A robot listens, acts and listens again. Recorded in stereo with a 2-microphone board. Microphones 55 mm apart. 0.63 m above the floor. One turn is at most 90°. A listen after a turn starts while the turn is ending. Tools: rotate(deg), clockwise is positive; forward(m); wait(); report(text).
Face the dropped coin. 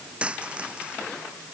rotate(20)
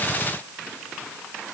wait()
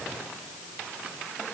report("I heard a dropped coin, but can't make it out now. It was about straight ahead or 140° right.")